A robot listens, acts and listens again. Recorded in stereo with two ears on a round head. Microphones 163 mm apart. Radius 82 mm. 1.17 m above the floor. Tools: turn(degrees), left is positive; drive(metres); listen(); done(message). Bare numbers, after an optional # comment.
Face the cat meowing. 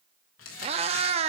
# The cat meowing: about 35° right or 145° right.
turn(-35)
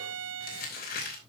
listen()
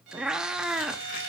done("Facing the cat meowing.")